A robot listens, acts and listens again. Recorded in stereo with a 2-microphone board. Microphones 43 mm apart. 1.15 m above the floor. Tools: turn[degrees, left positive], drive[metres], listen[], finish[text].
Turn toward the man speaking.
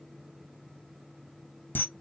Action: listen[]
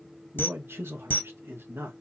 Thought: The man speaking: about 60° right or 120° right.
Action: turn[-60]
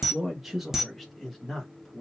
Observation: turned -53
Thought: So it is at 10° left.
Action: turn[10]
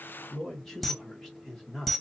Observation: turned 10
Thought: The man speaking is now 10° left.
Action: turn[10]
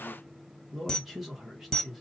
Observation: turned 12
Action: finish[Facing the man speaking.]